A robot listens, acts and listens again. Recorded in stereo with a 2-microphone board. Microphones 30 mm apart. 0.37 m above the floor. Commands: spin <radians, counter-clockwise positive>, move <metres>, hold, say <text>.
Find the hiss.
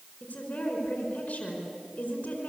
hold
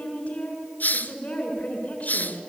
spin 1.31
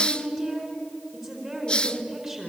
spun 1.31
spin 0.52
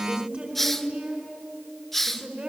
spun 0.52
say Found it: a hiss, straight ahead, under 1 m away.